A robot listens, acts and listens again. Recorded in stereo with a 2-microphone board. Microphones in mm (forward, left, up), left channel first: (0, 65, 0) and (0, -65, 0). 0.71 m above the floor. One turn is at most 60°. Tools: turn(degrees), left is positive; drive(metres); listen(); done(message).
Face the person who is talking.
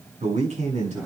turn(degrees=-60)
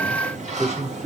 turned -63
turn(degrees=-50)
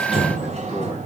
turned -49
listen()
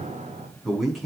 done("Found it: a man speaking, straight ahead.")